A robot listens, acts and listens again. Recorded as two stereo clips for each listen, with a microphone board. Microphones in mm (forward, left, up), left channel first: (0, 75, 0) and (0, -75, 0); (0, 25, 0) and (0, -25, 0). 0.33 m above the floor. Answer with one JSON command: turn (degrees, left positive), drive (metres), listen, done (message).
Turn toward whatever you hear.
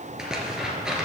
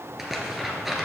{"turn": -30}
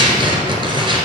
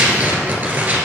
{"turn": -145}
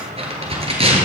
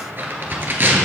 {"turn": -40}
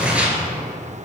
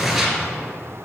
{"turn": -10}
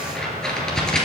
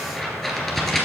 {"done": "Found it: tearing paper, straight ahead, 1 to 2 m away."}